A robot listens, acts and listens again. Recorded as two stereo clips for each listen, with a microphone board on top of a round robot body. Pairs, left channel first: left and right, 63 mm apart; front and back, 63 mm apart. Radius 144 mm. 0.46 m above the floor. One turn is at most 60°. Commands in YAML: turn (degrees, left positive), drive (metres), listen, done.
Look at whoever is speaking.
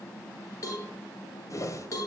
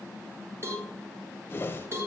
listen: true
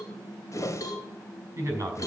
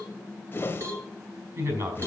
turn: -60
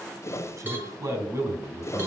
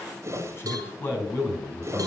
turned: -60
turn: -55
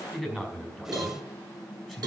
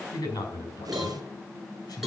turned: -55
done: "Found it: a man speaking, straight ahead, over 4 m away."